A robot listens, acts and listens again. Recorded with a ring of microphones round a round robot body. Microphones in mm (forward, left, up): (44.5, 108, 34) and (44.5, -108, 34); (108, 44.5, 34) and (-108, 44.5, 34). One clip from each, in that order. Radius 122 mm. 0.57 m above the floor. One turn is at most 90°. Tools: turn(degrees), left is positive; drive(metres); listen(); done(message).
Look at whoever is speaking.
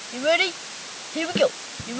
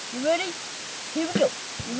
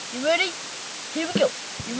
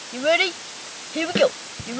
turn(degrees=90)
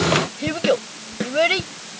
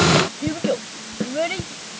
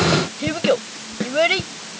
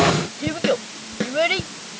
turn(degrees=85)
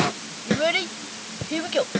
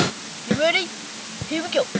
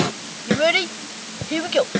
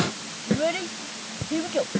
done("Facing the child speaking.")